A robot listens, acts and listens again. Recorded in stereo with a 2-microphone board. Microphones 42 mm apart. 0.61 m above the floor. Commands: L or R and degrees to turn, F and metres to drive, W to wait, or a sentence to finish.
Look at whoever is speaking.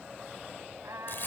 W
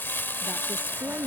R40
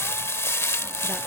W
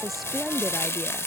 Facing the woman speaking.